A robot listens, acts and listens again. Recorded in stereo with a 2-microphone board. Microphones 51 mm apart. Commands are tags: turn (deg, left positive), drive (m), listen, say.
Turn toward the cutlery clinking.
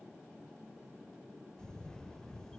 <listen/>
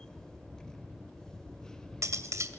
<turn deg="-90"/>
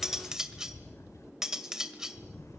<turn deg="-10"/>
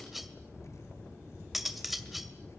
<say>Facing the cutlery clinking.</say>